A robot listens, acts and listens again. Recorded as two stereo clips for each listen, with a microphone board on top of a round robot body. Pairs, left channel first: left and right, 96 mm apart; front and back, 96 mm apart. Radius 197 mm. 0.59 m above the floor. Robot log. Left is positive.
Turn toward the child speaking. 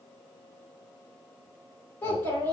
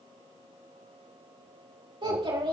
note: The child speaking: 155° left.
cmd yaw +155
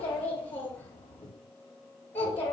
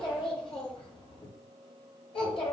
note: The child speaking is now 20° left.
cmd yaw +20
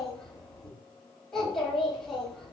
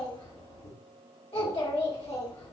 end: Found it: a child speaking, straight ahead, over 4 m away.